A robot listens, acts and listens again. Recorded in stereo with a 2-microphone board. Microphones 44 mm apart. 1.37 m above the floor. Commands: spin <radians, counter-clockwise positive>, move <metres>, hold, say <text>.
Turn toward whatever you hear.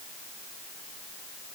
hold
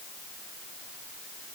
hold
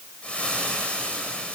spin 0.44
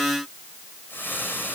spin 2.27
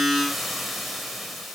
say Found it: frying, straight ahead.